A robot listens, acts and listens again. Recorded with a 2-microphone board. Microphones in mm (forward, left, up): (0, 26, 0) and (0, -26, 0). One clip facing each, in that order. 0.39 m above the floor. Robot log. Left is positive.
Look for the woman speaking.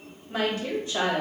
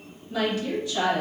note: The woman speaking: about 30° left or 150° left.
cmd yaw +30
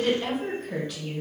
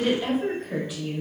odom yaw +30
note: So it is at 10° right.
cmd yaw -10
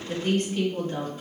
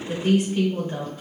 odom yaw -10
note: The woman speaking is now 25° right.
cmd yaw -25
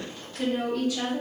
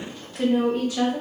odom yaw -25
note: The woman speaking is now 30° right.
cmd yaw -30
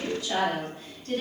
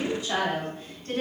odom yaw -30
note: The woman speaking is now 25° right.
cmd yaw -25
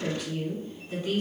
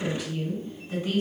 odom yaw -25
end: Found it: a woman speaking, straight ahead, 1 to 2 m away.